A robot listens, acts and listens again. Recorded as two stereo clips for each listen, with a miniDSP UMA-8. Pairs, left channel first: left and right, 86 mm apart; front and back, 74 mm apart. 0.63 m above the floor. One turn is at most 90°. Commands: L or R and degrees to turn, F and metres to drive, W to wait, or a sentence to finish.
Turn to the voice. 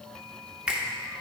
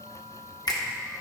W
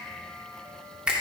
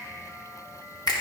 W
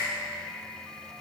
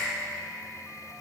I can't make out anyone speaking, only a finger snap.